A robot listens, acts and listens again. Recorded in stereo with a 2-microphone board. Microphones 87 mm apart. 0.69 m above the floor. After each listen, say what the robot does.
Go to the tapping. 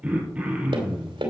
Turn 90° right.
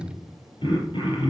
Keep listening.
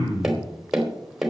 Drive 1.0 m forward.
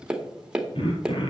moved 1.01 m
Turn 10° right.
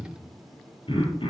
Keep listening.
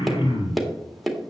Drive 1.0 m forward.
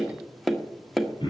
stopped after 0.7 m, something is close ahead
I am next to the tapping.